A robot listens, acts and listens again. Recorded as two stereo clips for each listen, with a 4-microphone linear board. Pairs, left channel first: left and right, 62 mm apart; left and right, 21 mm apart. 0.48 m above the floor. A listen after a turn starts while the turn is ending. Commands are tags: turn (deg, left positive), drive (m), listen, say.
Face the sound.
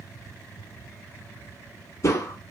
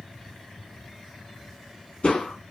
<turn deg="50"/>
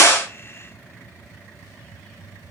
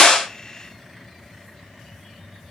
<listen/>
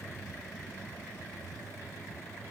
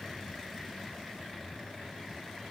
<say>I heard a crack, but can't make it out now. It was about straight ahead or 80° left.</say>